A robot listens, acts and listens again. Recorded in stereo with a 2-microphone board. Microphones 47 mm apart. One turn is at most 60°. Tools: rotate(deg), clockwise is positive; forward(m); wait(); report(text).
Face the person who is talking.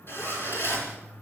wait()
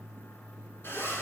wait()
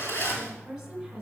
rotate(30)
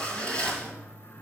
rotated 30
wait()
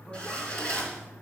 wait()
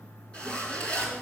report("I heard a woman speaking, but can't make it out now. It was about 20° left or 140° right.")